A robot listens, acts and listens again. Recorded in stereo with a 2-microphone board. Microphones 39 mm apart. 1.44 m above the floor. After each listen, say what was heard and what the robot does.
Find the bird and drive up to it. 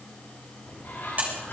The bird: about 55° left or 125° left. Turn 55° left.
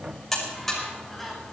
Drive 1.0 m forward.
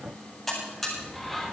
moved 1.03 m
Drive 1.0 m forward.
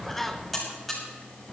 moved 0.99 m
Drive 1.0 m forward.
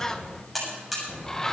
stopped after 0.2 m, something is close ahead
The bird is now 10° left. Turn 10° left.
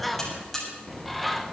Arrived at the bird, straight ahead.